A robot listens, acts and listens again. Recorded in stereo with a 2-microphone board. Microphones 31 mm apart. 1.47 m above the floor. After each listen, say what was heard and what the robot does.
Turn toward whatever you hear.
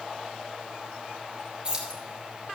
The keys jangling: about 30° right or 150° right. Turn 30° right.
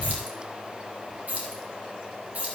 So it is at 130° right. Turn 130° right.
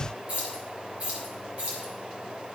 The keys jangling is now 40° right. Turn 40° right.
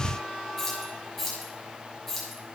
The keys jangling is now 10° left. Turn 10° left.
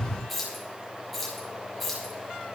Found it: keys jangling, straight ahead, over 4 m away.